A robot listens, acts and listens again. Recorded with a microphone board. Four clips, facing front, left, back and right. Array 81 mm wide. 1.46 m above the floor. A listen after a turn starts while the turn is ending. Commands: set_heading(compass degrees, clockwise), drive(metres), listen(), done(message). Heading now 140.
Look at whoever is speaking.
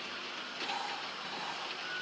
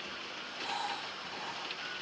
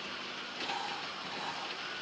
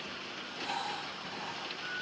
listen()
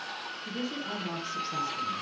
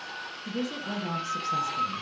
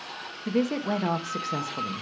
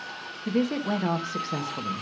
set_heading(290)
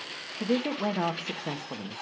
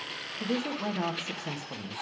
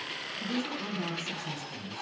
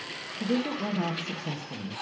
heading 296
set_heading(286)
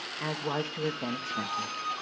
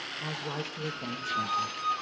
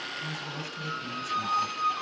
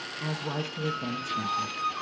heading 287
done("Found it: a woman speaking, straight ahead, 1 to 2 m away.")